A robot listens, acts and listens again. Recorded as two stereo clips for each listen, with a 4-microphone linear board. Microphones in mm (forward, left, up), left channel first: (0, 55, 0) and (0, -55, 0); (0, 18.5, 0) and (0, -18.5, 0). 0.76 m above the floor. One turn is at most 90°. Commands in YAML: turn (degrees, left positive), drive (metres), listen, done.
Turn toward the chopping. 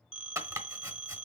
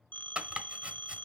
turn: -30
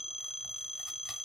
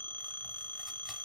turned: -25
listen: true
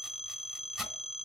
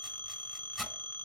done: "Facing the chopping, 1 to 2 m away."